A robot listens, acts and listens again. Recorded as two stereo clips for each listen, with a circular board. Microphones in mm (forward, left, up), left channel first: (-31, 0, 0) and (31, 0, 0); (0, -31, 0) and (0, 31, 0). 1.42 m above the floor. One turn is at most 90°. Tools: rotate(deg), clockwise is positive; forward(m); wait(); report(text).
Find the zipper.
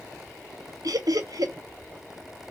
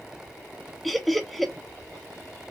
wait()
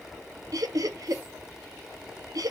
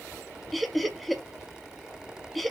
wait()
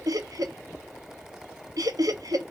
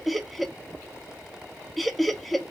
report("I can't make out a zipper to turn to.")